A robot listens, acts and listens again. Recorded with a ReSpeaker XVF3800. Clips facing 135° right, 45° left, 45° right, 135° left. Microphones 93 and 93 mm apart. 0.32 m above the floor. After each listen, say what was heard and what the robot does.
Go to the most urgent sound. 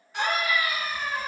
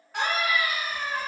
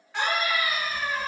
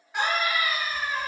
The scream: 55° left. Turn 55° left.
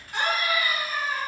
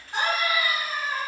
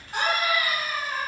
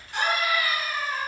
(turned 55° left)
The scream is now 10° right. Turn 10° right.
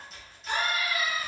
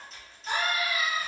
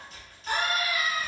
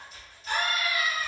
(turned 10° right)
Drive 1.0 m forward.
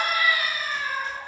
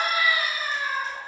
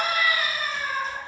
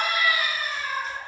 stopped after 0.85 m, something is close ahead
The scream is now 15° right. Turn 15° right.
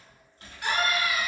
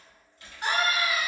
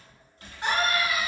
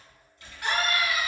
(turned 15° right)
I am next to the scream.